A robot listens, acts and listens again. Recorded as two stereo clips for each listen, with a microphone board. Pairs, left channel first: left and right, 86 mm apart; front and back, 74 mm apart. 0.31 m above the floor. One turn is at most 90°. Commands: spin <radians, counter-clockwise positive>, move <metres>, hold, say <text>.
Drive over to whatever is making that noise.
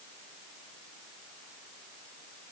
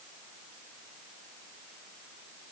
hold
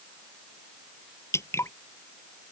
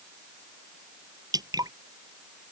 spin 1.57
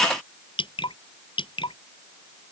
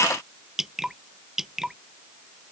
spin 1.57
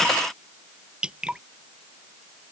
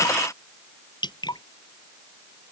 spin -0.17
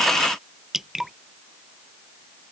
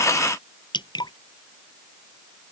move 1.0
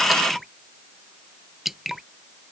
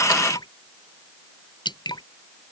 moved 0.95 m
move 1.0
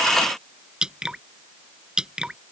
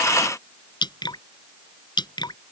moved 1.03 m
spin -0.17
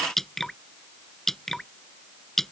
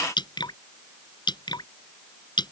move 1.0
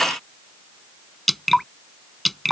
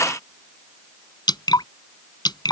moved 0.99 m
move 1.0
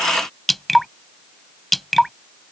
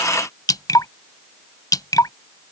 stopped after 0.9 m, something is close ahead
say Arrived at the dripping, straight ahead.